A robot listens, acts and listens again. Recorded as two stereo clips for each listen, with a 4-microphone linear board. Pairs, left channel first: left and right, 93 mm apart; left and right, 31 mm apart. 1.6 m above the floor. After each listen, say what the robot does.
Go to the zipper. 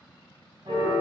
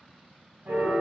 Keep listening.
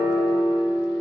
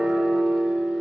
Keep listening.
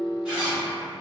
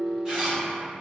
Turn 15° right.
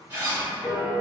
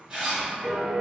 Turn 150° right.
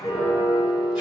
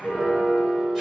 Keep listening.
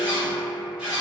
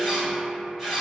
Turn 10° right.
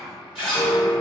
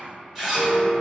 Drive 1.0 m forward.
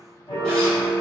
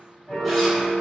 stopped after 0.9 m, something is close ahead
Keep listening.
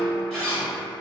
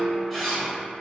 Turn 10° left.
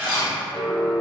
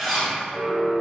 Arrived at the zipper, straight ahead.